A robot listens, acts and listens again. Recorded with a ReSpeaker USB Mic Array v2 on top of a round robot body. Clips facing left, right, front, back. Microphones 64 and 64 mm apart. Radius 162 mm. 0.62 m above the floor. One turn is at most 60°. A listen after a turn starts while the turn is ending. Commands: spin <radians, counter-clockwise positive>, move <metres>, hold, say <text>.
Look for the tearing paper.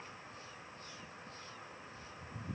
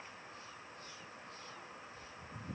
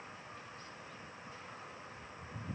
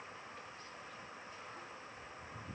hold
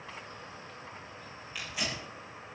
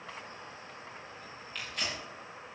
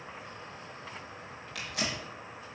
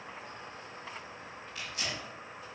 say Found it: tearing paper, straight ahead.